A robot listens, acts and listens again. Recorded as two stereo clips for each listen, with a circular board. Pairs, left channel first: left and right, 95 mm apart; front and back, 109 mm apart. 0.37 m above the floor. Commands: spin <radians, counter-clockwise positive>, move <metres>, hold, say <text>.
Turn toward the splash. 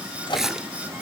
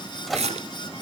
spin -3.05
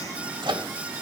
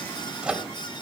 say I heard a splash from this way, but can't make it out now.